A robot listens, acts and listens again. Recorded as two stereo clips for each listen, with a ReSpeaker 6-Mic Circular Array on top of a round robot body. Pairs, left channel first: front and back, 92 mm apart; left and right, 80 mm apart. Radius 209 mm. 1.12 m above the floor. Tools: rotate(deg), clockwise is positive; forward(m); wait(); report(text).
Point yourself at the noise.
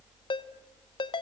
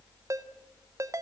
rotate(40)
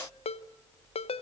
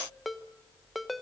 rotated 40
report("Facing the ringtone.")